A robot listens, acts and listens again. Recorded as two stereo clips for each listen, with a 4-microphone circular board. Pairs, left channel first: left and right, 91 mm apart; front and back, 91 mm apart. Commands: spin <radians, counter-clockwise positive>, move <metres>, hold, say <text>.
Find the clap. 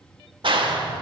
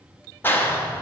spin -1.13
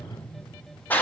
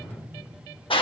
spin 0.35
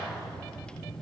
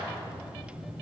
say Facing the clap.